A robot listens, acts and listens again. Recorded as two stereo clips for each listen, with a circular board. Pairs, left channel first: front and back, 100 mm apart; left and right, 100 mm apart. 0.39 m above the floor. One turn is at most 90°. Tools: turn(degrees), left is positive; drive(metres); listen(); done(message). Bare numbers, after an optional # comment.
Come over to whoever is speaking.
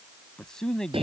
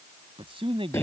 # The man speaking: 85° right.
turn(-85)
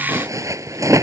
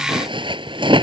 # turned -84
listen()
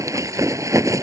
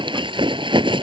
listen()
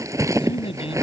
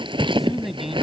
drive(1.0)
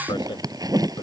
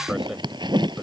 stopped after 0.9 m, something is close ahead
listen()
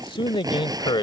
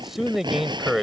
done("Arrived at the man speaking, straight ahead.")